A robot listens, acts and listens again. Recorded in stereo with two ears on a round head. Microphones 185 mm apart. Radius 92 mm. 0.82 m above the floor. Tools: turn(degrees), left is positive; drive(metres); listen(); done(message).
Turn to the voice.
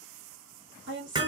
turn(degrees=-60)
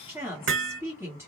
turn(degrees=-15)
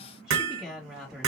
done("Found it: a woman speaking, straight ahead.")